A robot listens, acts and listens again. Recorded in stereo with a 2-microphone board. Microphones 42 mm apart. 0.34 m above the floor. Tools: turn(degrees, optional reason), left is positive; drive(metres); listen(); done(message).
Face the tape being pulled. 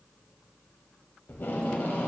turn(degrees=55, reason="The tape being pulled: about 55° left or 125° left.")
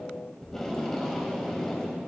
turn(degrees=10, reason="So it is at 10° left.")
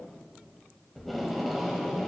done("Found it: tape being pulled, straight ahead.")